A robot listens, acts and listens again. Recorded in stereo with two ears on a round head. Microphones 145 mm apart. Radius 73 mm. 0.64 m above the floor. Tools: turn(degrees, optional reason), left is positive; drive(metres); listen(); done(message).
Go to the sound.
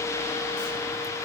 listen()
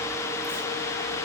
listen()
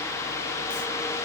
done("I can't make out anything.")